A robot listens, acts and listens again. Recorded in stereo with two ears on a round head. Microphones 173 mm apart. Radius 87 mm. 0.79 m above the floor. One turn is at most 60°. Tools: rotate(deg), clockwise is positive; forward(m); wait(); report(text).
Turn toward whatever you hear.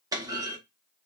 rotate(20)
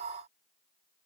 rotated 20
wait()
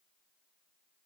report("I heard a clunk, but can't make it out now. It was about straight ahead or 140° right.")